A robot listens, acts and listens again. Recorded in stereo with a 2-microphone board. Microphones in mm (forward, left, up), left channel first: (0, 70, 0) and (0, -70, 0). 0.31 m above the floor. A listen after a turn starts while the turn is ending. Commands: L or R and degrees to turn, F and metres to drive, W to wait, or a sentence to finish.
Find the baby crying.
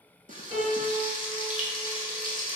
W
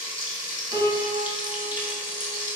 W
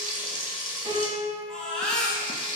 L30
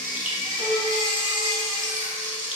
L145
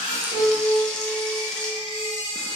L60
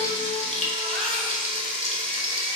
Facing the baby crying.